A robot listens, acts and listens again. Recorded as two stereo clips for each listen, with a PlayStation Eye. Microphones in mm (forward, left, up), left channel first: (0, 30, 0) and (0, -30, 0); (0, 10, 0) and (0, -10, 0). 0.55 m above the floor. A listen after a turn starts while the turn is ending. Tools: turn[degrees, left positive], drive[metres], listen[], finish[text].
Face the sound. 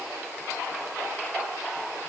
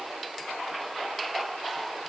Action: listen[]
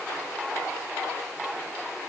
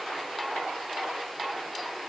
Action: listen[]
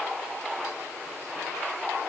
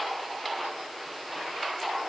Action: finish[I can't make out anything to turn to.]